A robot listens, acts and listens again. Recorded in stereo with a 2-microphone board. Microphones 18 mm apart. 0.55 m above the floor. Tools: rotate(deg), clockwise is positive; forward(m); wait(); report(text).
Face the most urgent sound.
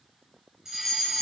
rotate(20)
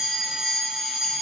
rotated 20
rotate(135)
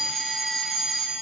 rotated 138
report("Facing the fire alarm, over 4 m away.")